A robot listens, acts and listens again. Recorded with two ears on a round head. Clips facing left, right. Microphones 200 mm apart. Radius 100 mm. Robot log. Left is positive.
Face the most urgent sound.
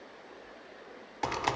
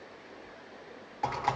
cmd idle
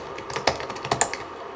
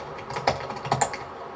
cmd idle
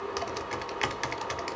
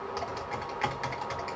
end: I can't make out anything urgent to turn to.